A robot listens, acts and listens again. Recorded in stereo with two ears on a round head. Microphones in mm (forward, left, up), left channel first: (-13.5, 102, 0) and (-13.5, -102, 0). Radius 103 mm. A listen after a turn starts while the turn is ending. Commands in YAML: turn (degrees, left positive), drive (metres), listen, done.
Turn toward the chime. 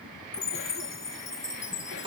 turn: 15
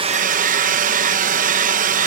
listen: true
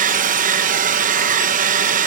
listen: true
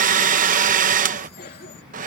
done: "I heard a chime, but can't make it out now. It was about straight ahead or 150° left."